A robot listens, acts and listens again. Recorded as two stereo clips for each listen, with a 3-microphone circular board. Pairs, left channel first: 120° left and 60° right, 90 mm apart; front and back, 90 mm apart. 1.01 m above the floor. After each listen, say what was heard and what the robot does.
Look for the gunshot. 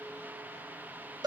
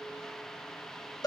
Keep listening.
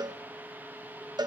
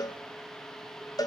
Keep listening.
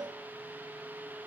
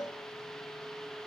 I can't make out a gunshot to turn to.